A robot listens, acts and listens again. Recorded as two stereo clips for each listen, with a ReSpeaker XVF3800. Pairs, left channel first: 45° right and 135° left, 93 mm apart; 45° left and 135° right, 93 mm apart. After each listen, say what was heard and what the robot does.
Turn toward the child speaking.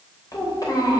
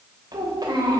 The child speaking: 95° right. Turn 95° right.
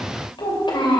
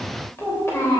The child speaking is now 15° right. Turn 15° right.
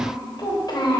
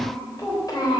Found it: a child speaking, straight ahead.